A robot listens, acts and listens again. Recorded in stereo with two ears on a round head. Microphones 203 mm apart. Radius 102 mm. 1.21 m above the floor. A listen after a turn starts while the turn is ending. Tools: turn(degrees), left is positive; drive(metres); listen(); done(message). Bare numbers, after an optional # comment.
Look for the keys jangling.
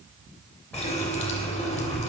turn(30)
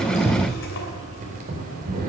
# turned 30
# So it is at 45° right.
turn(-45)
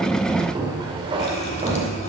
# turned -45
# The keys jangling is now 30° right.
turn(-30)
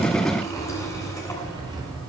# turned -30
# The keys jangling is now 20° right.
turn(-20)
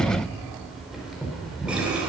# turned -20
done("Facing the keys jangling, 2 to 4 m away.")